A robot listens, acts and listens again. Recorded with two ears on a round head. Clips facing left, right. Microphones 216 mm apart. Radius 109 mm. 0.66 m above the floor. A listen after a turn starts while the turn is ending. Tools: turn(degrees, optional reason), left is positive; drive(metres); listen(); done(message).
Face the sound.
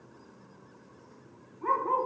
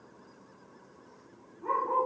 turn(degrees=90)
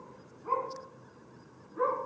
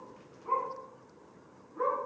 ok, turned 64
turn(degrees=30, reason="So it is at 30° left.")
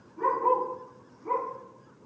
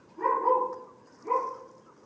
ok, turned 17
turn(degrees=10, reason="The dog barking is now 10° left.")
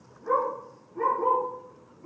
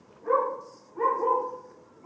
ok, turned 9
done("Found it: a dog barking, straight ahead, over 4 m away.")